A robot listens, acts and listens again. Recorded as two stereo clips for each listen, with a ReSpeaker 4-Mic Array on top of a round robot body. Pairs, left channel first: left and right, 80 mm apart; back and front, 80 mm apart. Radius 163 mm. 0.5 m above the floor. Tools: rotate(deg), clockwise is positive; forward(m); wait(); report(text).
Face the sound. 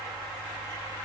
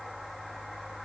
wait()
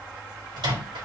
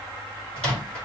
rotate(105)
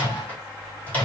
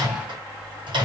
rotate(-20)
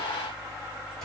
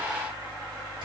wait()
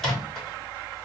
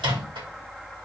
report("Found it: a microwave, straight ahead, 2 to 4 m away.")